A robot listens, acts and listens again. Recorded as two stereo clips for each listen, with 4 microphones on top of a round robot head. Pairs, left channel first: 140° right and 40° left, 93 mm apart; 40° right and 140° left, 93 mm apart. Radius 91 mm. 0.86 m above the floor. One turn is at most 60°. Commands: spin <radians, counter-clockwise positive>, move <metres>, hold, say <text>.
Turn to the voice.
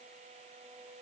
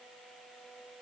hold
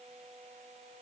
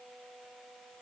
hold
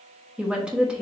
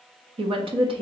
spin 1.05
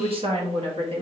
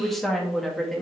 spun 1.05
spin 0.79
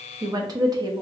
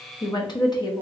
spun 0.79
say Facing the woman speaking.